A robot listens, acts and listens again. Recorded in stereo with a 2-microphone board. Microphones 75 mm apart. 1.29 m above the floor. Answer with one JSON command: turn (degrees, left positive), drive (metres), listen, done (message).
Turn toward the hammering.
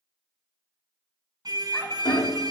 {"turn": 65}
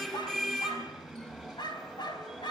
{"listen": true}
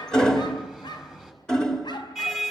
{"turn": 10}
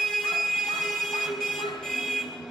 {"listen": true}
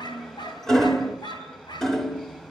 {"done": "Found it: hammering, straight ahead, 2 to 4 m away."}